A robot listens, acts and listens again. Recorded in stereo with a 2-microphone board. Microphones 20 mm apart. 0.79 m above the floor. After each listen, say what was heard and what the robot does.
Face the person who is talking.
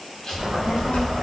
The child speaking: about 70° left or 110° left. Turn 70° left.
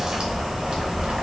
So it is at 20° right. Turn 20° right.
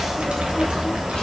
The child speaking is now 15° right. Turn 15° right.
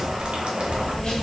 The child speaking is now 30° right. Turn 30° right.
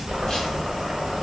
The child speaking is now 25° right. Turn 25° right.
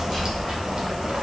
The child speaking is now 10° right. Turn 10° right.
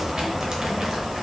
Facing the child speaking.